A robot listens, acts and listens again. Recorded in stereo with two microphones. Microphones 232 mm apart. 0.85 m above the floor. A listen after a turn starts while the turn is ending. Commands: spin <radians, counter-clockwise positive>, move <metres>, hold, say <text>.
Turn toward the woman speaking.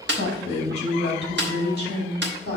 spin 0.70
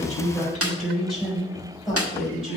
say Found it: a woman speaking, straight ahead.